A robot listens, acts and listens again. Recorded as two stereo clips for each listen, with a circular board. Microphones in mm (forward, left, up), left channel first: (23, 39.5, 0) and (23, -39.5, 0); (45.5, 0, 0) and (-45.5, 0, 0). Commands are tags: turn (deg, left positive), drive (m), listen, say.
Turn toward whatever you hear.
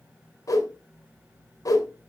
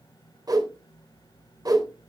<turn deg="135"/>
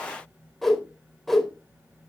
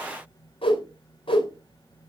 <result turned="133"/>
<say>Facing the whoosh, 2 to 4 m away.</say>